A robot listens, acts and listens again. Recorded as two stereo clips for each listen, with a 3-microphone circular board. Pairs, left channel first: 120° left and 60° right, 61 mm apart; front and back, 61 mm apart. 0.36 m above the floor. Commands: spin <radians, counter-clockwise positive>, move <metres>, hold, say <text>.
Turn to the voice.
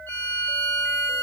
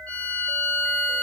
hold
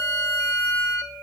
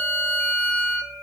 hold
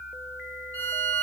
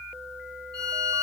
say I can't make out anyone speaking to turn to.